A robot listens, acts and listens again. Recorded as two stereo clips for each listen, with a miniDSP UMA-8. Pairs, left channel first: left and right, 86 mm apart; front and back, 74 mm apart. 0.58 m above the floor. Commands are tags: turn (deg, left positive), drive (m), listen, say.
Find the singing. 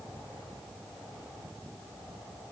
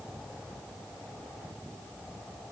<listen/>
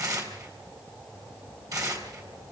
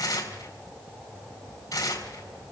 <listen/>
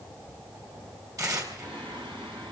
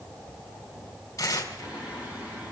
<turn deg="-110"/>
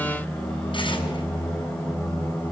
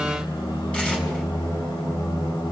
<say>Facing the singing.</say>